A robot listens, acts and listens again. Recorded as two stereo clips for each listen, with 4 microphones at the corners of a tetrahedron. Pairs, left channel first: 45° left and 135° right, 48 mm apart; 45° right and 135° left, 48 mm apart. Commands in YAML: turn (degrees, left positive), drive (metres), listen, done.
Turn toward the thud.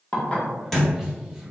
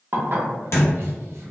turn: -40
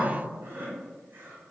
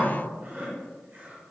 done: "Facing where the thud came from. I can't hear it now."